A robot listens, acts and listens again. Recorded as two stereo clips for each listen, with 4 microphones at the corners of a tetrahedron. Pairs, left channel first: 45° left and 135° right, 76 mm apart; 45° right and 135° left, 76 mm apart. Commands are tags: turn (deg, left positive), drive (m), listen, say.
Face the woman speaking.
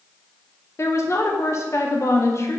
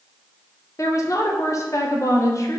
<say>Found it: a woman speaking, straight ahead, 1 to 2 m away.</say>